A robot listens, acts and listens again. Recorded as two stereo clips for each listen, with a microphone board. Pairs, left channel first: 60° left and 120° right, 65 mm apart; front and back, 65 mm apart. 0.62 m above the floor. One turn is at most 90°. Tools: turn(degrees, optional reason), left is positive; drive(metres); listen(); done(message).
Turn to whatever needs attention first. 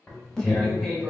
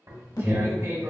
turn(degrees=-15, reason="The alarm: 15° right.")
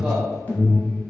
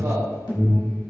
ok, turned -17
done("Found it: an alarm, straight ahead.")